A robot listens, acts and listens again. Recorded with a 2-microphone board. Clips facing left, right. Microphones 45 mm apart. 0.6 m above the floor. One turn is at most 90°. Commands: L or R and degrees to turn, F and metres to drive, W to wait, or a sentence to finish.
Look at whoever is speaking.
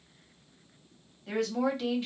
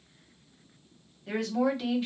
R30
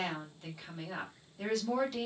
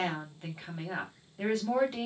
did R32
R90
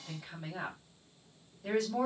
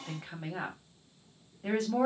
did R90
R55
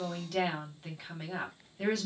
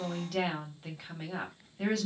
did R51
Found it: a woman speaking, straight ahead.